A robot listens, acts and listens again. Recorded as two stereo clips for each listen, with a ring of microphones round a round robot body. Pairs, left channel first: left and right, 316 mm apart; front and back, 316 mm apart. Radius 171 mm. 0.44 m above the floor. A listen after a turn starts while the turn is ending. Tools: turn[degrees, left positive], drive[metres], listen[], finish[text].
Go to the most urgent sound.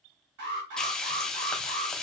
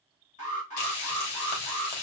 Thought: The alarm: 70° right.
Action: turn[-70]
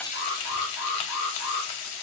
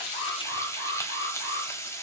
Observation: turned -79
Thought: The alarm is now 10° left.
Action: turn[10]
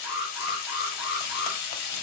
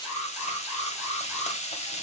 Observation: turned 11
Action: drive[1.0]
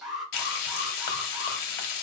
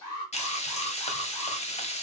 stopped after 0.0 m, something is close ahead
Action: finish[Blocked. The alarm is further on, straight ahead.]